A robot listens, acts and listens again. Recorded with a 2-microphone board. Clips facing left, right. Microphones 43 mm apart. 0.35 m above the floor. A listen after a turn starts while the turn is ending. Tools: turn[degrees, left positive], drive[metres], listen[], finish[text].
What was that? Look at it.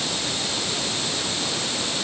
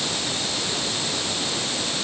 Action: listen[]
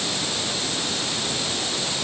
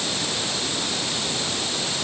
Action: listen[]
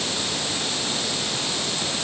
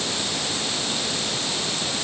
Action: finish[I can't make out anything.]